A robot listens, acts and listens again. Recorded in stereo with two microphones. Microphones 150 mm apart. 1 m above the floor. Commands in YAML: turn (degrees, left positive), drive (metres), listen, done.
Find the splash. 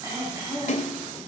turn: 60
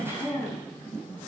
listen: true
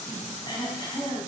done: "I heard a splash, but can't make it out now. It was about straight ahead or 60° left."